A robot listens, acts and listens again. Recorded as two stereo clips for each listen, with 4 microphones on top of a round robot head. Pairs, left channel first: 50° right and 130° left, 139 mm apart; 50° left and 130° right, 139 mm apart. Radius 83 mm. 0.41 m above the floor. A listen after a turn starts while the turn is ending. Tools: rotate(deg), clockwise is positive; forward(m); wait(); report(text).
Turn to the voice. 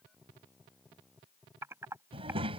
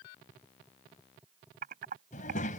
rotate(-80)
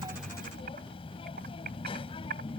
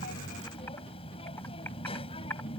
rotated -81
report("Found it: a child speaking, straight ahead.")